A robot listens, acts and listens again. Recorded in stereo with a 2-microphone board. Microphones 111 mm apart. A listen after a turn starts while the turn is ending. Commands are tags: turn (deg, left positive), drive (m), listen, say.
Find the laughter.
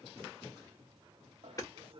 <turn deg="-60"/>
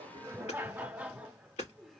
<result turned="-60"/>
<say>Facing the laughter.</say>